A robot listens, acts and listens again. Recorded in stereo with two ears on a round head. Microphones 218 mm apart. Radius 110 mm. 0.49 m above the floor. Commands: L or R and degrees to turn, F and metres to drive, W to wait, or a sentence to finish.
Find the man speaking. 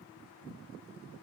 W
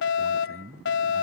R40
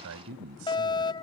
R110
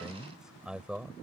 Facing the man speaking.